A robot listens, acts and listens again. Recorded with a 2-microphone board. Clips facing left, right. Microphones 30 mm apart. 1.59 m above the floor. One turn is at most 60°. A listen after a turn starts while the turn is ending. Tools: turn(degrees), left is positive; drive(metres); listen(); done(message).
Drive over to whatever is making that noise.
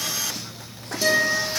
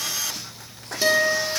turn(degrees=-30)
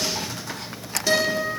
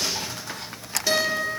drive(metres=1.0)
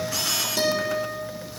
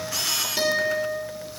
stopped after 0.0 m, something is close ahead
turn(degrees=-15)
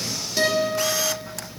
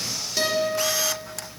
done("Blocked. The guitar is further on, straight ahead.")